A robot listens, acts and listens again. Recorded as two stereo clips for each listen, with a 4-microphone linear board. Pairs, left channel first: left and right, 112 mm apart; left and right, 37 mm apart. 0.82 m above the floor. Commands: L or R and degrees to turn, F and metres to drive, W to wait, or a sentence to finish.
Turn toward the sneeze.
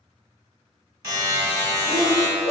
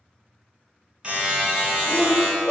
R65
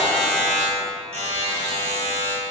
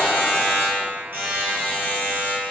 W
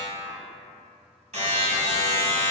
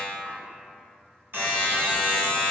I heard a sneeze, but can't make it out now. It was about straight ahead or 50° right.